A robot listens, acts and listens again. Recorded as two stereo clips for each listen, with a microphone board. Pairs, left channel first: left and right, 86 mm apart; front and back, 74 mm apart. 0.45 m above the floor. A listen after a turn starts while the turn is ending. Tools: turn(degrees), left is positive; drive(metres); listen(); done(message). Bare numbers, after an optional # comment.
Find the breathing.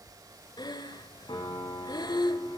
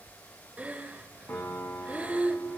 # The breathing: 110° left.
turn(110)
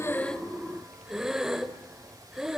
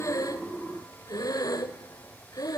done("Facing the breathing, 1 to 2 m away.")